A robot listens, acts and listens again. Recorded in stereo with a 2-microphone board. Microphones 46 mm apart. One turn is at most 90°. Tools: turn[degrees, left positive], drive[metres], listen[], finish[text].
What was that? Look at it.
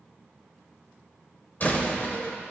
Thought: The door slam: about 40° left or 140° left.
Action: turn[40]
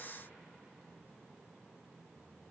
Action: listen[]
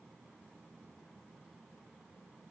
Action: finish[I heard a door slam, but can't make it out now. It was about straight ahead or 100° left.]